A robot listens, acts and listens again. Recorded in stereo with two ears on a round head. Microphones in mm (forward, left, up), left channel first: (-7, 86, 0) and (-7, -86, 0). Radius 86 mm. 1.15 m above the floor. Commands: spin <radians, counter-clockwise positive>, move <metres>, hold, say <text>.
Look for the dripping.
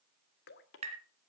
spin 0.96
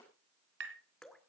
say Found it: dripping, straight ahead.